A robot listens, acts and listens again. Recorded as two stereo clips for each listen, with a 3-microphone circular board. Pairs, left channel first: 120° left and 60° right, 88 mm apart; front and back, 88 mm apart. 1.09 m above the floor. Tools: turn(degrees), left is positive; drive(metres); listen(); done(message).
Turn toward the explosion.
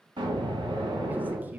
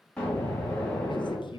turn(degrees=-80)
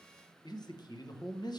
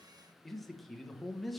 done("Facing where the explosion came from. I can't hear it now.")